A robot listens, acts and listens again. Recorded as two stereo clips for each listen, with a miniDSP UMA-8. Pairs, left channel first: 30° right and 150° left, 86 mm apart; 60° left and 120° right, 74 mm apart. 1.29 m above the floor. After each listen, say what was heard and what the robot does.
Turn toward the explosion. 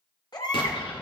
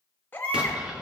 The explosion: 45° right. Turn 45° right.
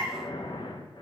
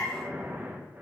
I heard an explosion from this way, but can't make it out now.